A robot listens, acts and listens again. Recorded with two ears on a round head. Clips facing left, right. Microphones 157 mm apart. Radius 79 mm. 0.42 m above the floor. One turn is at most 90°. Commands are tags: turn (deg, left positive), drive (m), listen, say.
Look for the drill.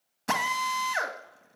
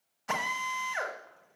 <turn deg="65"/>
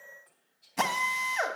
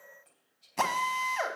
<say>Facing the drill, 1 to 2 m away.</say>